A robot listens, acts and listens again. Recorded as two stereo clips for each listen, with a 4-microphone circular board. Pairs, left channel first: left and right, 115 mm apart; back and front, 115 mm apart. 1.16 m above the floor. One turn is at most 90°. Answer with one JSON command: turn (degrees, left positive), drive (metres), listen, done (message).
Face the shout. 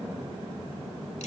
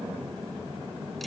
{"listen": true}
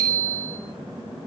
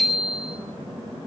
{"listen": true}
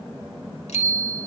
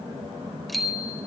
{"done": "I can't make out a shout, only a bicycle bell."}